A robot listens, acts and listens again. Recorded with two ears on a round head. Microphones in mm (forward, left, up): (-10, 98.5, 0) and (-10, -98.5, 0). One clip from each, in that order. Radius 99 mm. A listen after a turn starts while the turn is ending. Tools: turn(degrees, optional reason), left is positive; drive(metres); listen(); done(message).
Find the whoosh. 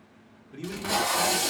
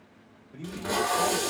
listen()
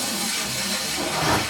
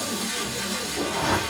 turn(degrees=25, reason="The whoosh: about 25° left or 155° left.")
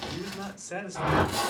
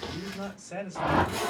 done("Facing the whoosh.")